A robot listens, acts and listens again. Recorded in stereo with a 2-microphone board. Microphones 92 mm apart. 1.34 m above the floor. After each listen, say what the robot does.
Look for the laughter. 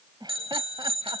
Turn 50° right.
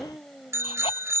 Facing the laughter.